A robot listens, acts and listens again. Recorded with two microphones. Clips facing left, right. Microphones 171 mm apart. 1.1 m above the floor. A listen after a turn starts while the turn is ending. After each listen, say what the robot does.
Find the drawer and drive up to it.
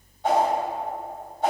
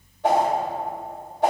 Keep listening.
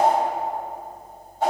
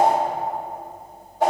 Keep listening.
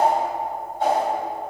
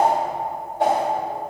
I can't make out a drawer to turn to.